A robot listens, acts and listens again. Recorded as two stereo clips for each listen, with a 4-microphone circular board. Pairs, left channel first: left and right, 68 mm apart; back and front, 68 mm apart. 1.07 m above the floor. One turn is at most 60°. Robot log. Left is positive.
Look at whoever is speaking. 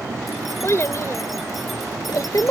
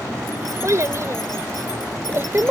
note: The child speaking: 55° left.
cmd yaw +55
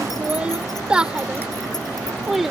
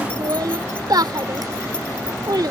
end: Facing the child speaking.